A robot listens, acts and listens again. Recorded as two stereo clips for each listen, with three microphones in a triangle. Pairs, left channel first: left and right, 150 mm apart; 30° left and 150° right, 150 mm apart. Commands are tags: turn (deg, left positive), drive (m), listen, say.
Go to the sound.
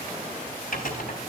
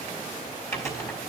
<turn deg="100"/>
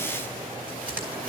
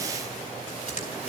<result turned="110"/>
<turn deg="-10"/>
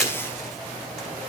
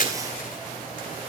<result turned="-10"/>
<drive m="1.0"/>
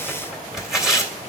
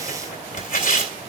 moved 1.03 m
<drive m="1.0"/>
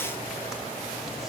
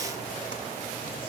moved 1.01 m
<listen/>
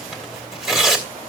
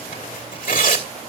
<drive m="1.0"/>
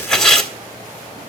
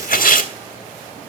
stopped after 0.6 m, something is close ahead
<say>Arrived at the tearing paper, straight ahead.</say>